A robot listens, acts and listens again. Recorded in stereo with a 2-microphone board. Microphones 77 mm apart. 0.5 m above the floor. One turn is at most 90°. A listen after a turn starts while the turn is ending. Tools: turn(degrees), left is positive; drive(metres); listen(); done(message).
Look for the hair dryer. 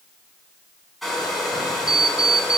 turn(degrees=30)
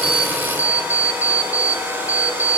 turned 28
turn(degrees=-25)
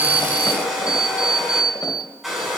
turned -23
done("Facing the hair dryer, over 4 m away.")